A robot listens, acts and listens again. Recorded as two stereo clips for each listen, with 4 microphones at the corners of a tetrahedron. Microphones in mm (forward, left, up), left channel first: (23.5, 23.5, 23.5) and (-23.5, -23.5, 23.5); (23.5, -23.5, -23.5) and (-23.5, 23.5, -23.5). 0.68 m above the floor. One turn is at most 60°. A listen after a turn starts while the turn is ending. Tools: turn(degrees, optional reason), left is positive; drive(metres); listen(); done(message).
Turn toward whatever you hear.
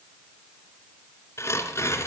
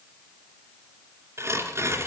turn(degrees=60, reason="The tearing paper: 90° left.")
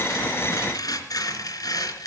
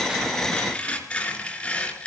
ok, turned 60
turn(degrees=30, reason="The tearing paper is now 30° left.")
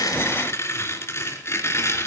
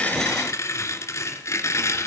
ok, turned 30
done("Facing the tearing paper, 2 to 4 m away.")